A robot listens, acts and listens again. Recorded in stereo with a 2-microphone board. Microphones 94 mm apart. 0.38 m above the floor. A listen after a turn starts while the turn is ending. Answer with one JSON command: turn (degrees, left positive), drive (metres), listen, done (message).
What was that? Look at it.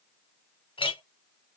{"turn": 65}
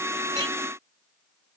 {"listen": true}
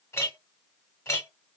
{"turn": 35}
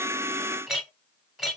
{"done": "Found it: a clink, straight ahead."}